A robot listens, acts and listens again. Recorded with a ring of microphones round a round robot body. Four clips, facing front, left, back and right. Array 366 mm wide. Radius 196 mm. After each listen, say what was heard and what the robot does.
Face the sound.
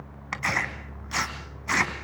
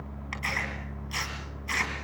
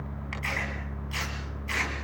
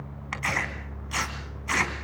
The tearing paper: 25° right. Turn 25° right.
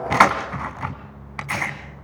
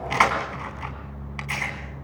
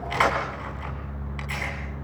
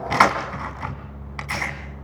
The tearing paper is now 15° right. Turn 15° right.
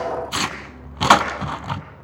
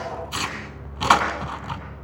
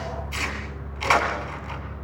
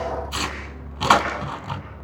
Facing the tearing paper, 2 to 4 m away.